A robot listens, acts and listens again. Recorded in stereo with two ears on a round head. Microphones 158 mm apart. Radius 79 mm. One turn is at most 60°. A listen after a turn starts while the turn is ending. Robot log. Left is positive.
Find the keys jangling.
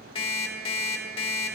cmd idle
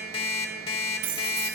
note: The keys jangling: about 65° right or 115° right.
cmd yaw -60
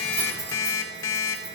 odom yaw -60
cmd idle
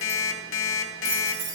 note: So it is at 25° right.
cmd yaw -25
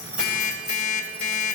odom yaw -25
cmd idle
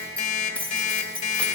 note: The keys jangling is now 10° left.
cmd yaw +10
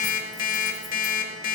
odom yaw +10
cmd idle
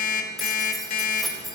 end: Found it: keys jangling, straight ahead.